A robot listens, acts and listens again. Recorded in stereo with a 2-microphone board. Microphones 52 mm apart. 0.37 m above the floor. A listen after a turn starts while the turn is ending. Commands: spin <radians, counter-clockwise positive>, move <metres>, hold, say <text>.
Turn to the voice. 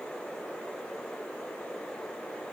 hold
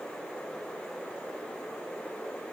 hold
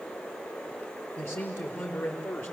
spin 0.87
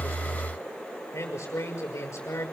spin 1.31
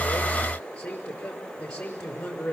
spin 0.35
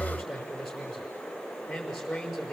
say Found it: a man speaking, straight ahead.